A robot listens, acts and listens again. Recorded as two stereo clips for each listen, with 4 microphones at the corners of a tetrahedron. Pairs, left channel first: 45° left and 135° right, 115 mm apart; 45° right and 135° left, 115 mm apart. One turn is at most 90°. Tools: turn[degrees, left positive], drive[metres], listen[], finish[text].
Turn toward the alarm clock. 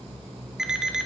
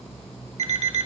Thought: The alarm clock: 140° left.
Action: turn[90]
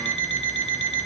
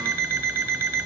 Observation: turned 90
Thought: The alarm clock is now 70° left.
Action: turn[70]
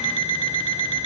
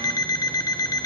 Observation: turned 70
Thought: The alarm clock is now 10° left.
Action: turn[10]
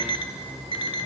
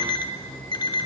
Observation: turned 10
Action: finish[Facing the alarm clock.]